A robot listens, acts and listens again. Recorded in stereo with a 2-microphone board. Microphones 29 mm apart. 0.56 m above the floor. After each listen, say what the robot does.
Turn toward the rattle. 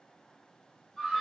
Keep listening.
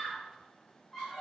Keep listening.
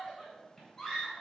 I can't make out a rattle to turn to.